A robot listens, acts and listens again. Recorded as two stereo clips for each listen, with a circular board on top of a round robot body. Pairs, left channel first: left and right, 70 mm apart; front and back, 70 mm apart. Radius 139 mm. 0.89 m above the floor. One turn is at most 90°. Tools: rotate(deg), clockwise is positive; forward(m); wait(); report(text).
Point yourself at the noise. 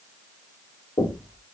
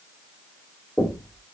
rotate(-80)
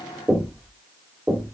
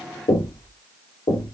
rotate(10)
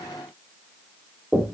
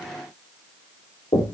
report("Facing the knocking, 2 to 4 m away.")